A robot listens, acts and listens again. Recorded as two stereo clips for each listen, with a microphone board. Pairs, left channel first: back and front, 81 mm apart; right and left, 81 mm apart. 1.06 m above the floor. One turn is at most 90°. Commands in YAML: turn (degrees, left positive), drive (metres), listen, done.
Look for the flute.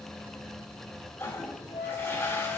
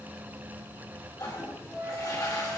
turn: -90
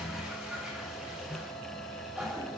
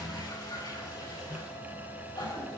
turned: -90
turn: -80
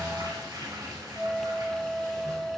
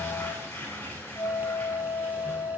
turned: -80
turn: -80
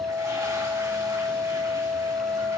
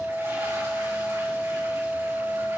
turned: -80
done: "Facing the flute."